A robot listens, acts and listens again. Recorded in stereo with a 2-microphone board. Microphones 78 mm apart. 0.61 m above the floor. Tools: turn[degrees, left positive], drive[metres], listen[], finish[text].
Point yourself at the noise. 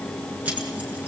Thought: The keys jangling: about 20° right or 160° right.
Action: turn[-20]
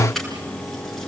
Action: finish[Found it: keys jangling, straight ahead.]